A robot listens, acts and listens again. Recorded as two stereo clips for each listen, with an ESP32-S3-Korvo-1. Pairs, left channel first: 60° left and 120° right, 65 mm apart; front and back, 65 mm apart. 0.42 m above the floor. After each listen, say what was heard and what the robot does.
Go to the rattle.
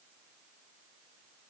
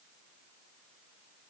Keep listening.
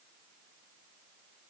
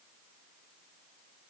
Keep listening.
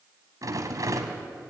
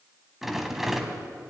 The rattle: 95° right. Turn 95° right.
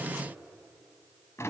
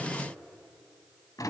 The rattle is now 15° left. Turn 15° left.
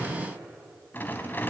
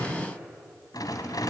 Drive 1.0 m forward.
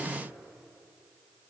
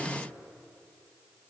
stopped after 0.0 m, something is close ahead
Keep listening.
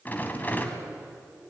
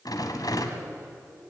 Blocked. The rattle is further on, straight ahead.